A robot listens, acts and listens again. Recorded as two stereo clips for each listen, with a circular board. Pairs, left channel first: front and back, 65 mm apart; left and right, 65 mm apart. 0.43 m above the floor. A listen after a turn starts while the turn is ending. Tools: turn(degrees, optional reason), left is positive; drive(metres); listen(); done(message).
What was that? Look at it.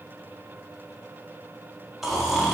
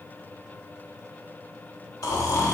turn(degrees=95, reason="The snoring: 95° left.")
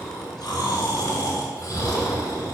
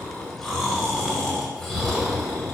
done("Found it: snoring, straight ahead.")